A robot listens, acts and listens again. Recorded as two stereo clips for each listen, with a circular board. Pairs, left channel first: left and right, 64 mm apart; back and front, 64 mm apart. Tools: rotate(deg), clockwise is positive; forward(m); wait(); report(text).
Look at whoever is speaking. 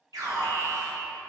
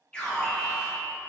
wait()
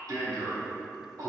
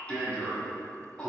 wait()
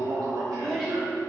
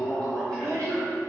rotate(-10)
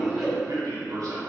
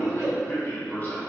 report("Facing the child speaking.")